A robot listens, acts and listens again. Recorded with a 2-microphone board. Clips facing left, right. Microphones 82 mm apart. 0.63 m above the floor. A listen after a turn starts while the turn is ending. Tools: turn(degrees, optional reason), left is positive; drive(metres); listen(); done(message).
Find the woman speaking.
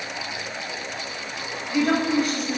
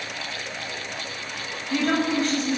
turn(degrees=30)
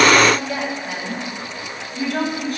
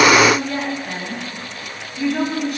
turn(degrees=135, reason="So it is at 135° left.")
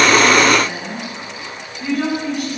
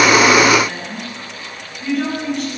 turn(degrees=10, reason="The woman speaking is now 10° left.")
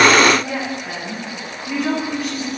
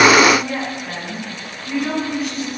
done("Found it: a woman speaking, straight ahead.")